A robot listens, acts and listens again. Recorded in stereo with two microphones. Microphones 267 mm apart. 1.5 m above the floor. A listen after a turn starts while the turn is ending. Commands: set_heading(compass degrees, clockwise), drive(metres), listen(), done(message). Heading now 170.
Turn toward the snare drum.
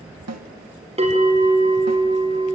set_heading(240)
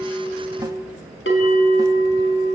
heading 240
listen()
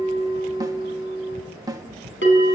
set_heading(255)
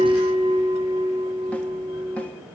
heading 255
listen()
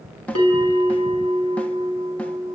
done("Facing the snare drum, 1 to 2 m away.")